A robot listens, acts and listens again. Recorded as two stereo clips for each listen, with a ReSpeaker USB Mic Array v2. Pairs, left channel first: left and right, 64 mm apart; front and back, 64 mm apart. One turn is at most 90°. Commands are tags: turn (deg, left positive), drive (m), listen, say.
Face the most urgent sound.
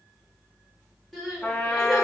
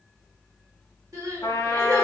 <turn deg="90"/>
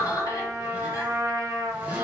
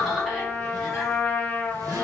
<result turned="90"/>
<turn deg="85"/>
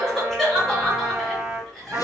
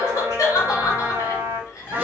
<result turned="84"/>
<say>Found it: crying, straight ahead.</say>